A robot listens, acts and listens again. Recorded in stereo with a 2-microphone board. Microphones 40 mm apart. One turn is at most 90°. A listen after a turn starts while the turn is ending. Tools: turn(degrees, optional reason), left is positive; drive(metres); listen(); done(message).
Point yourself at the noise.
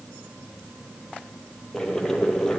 turn(degrees=30)
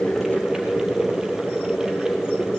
turn(degrees=-15, reason="So it is at 15° right.")
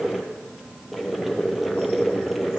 done("Found it: boiling, straight ahead.")